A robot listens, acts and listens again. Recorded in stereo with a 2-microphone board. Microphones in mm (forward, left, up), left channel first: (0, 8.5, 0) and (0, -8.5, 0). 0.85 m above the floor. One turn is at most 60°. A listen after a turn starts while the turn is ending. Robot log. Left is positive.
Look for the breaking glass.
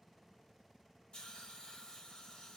cmd idle
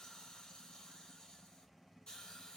cmd idle
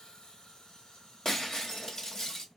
note: The breaking glass: about 35° left or 145° left.
cmd yaw +35
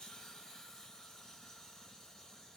cmd idle
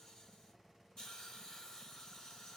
end: I heard breaking glass, but can't make it out now. It was about straight ahead or 110° left.